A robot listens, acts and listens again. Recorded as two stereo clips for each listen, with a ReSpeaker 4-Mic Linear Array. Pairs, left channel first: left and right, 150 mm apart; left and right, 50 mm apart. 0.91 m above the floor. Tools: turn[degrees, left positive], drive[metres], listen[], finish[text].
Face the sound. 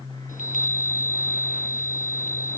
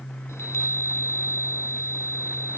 Thought: The chime: about 65° left or 115° left.
Action: turn[65]
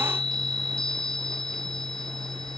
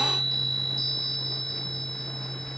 Action: finish[Facing the chime.]